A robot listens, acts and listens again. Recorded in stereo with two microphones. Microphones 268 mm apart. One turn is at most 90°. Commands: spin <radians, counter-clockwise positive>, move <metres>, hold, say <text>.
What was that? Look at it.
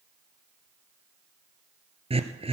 spin -0.35
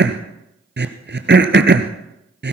spin -1.57
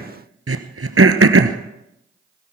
spin -1.05
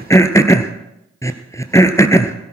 spin 0.17
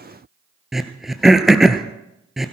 say Facing the throat clearing, 1 to 2 m away.